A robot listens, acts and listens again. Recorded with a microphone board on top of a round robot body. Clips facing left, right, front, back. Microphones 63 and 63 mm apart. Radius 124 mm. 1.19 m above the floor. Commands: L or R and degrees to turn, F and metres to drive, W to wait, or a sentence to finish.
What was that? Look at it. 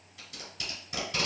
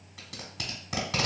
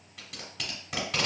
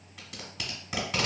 R90
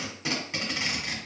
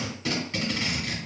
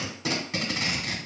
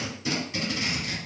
L15
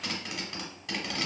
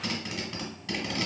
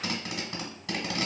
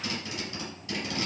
Facing the tape being pulled, 1 to 2 m away.